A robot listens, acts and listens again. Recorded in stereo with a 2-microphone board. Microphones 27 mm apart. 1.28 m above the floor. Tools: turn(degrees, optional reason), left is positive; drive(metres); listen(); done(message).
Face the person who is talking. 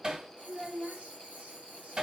turn(degrees=-55, reason="The child speaking: about 55° right or 125° right.")
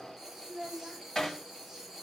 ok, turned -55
turn(degrees=-75, reason="So it is at 75° right.")
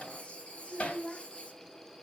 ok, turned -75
turn(degrees=10, reason="The child speaking is now 10° left.")
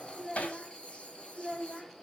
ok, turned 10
done("Found it: a child speaking, straight ahead.")